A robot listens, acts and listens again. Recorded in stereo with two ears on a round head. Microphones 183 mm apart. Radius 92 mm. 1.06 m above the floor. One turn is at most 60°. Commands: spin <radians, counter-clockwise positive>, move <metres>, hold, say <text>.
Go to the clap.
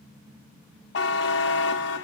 hold
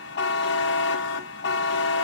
hold
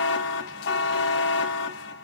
say I can't make out a clap to turn to.